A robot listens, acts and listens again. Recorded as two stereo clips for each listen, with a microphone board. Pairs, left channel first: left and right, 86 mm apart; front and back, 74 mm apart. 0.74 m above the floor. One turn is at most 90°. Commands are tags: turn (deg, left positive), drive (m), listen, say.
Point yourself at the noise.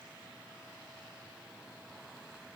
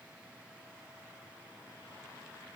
<listen/>
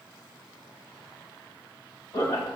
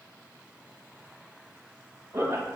<turn deg="90"/>
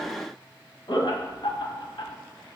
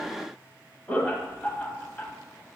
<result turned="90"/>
<turn deg="65"/>
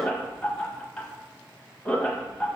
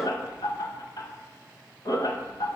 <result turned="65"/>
<turn deg="10"/>
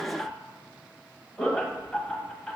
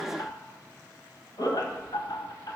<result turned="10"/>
<say>Found it: laughter, straight ahead, 1 to 2 m away.</say>